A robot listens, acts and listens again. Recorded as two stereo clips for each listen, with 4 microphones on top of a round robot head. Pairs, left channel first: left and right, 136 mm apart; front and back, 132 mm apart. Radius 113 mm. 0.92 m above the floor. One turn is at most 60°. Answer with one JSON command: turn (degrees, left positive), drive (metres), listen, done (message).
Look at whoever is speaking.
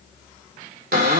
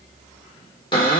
{"listen": true}
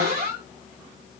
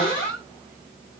{"listen": true}
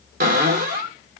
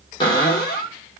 {"done": "I can't make out anyone speaking, only a cupboard door."}